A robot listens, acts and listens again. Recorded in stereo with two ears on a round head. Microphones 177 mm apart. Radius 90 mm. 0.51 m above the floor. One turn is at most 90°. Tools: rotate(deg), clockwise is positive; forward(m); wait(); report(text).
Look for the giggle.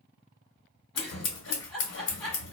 rotate(-30)
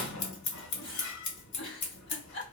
rotate(-90)
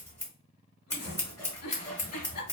rotate(-90)
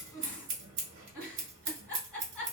report("Found it: a giggle, straight ahead, 1 to 2 m away.")